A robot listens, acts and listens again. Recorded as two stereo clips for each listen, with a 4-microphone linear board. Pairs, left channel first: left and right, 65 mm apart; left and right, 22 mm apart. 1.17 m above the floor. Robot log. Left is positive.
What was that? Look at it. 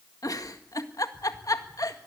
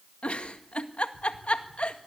note: The giggle: about 75° left or 105° left.
cmd yaw +75
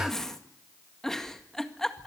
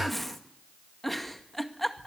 end: Facing the giggle, 1 to 2 m away.